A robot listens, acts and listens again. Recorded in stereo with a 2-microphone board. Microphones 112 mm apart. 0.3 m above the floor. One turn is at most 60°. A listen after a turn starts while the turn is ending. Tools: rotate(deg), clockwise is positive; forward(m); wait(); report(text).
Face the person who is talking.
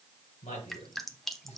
rotate(-60)
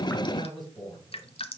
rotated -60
rotate(-40)
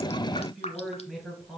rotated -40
report("Facing the man speaking, over 4 m away.")